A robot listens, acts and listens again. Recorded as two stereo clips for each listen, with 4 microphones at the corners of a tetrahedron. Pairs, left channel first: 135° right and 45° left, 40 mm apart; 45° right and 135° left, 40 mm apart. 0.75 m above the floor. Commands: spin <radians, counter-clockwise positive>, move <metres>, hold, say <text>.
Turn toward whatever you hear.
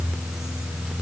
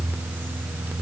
hold
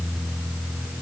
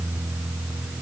hold
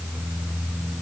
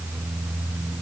say I can't make out anything.